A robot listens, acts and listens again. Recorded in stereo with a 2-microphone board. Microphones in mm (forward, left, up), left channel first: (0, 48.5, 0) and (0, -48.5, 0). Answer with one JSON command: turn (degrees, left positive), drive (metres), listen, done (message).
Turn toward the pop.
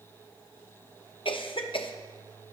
{"listen": true}
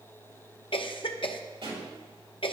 {"turn": -65}
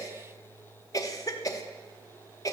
{"listen": true}
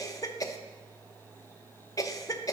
{"done": "I heard a pop, but can't make it out now. It was about straight ahead or 50° right."}